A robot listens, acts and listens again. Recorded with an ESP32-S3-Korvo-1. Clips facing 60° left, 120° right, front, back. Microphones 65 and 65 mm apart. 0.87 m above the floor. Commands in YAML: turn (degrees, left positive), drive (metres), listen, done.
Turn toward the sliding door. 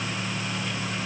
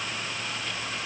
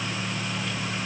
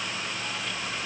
listen: true
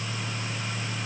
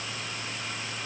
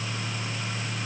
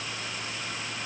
listen: true
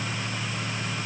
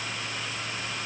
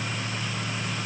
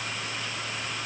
done: "I can't make out a sliding door."